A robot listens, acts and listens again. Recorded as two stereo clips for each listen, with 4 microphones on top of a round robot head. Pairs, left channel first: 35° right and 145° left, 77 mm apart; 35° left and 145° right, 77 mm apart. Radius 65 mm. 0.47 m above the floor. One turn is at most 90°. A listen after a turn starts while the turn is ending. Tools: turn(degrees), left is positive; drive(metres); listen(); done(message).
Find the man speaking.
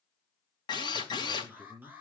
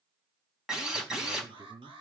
turn(degrees=-90)
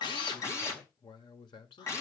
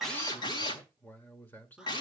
turn(degrees=-30)
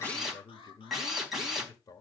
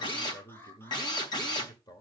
done("Found it: a man speaking, straight ahead, 1 to 2 m away.")